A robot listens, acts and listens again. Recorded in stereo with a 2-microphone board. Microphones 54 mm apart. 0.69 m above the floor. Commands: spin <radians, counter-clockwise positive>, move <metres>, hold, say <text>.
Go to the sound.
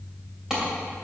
spin -0.52
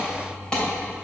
spin 0.35
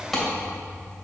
move 1.0
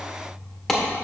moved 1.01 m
spin 0.17
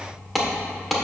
move 1.0
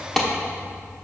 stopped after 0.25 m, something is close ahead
spin 0.17
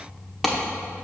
say I am next to the clap.